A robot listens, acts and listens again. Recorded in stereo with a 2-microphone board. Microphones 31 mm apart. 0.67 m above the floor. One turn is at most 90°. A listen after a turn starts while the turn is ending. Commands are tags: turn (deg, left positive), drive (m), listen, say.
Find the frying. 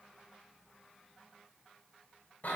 <listen/>
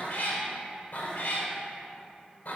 <listen/>
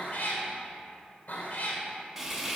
<turn deg="-30"/>
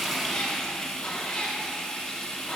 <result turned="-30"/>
<turn deg="25"/>
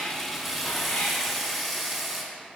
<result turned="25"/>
<say>Facing the frying.</say>